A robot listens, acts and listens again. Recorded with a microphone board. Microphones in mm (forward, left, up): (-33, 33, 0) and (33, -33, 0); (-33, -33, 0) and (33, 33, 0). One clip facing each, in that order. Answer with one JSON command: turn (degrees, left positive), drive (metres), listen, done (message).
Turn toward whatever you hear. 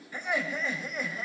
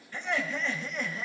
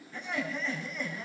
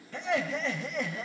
{"turn": 50}
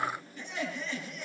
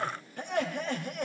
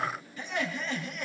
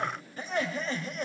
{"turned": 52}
{"turn": -10}
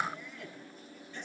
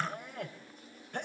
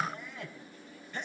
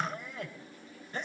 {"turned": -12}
{"done": "Facing the laughter."}